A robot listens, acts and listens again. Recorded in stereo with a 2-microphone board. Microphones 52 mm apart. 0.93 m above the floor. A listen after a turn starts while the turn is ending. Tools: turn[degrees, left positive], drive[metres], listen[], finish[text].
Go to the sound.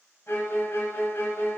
Thought: The violin: about 50° left or 130° left.
Action: turn[50]
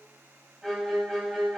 Action: drive[1.0]
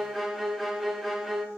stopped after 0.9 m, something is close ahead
Action: finish[Arrived at the violin, straight ahead.]